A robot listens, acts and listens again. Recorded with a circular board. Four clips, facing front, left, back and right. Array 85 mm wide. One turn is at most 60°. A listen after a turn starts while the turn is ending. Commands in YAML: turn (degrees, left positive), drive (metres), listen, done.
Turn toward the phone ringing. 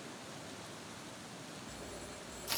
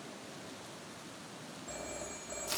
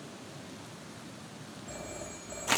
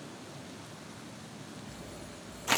turn: 60
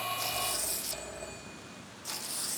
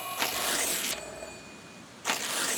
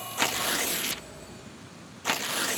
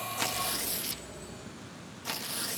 turn: 60
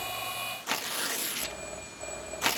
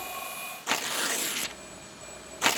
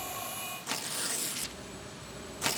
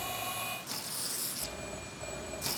turn: -15
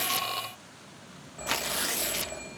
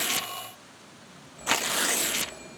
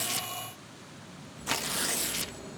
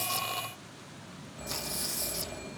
done: "Facing the phone ringing, 2 to 4 m away."